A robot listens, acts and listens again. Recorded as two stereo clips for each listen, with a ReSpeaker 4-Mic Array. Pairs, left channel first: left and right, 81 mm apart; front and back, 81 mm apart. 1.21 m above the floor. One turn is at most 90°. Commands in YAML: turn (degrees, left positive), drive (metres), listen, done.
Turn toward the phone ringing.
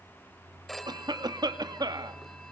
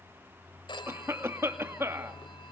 done: "Facing the phone ringing, 2 to 4 m away."